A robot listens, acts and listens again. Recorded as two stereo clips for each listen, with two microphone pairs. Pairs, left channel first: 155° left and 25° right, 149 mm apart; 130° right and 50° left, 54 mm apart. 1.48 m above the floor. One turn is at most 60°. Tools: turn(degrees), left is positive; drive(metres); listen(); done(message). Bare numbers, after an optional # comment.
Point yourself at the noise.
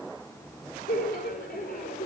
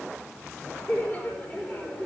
# The laughter: 170° left.
turn(60)
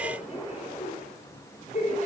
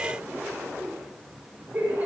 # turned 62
# The laughter is now 115° left.
turn(60)
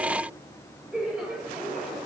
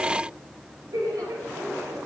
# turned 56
# The laughter is now 60° left.
turn(60)
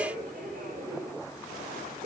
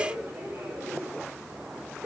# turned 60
done("Facing the laughter.")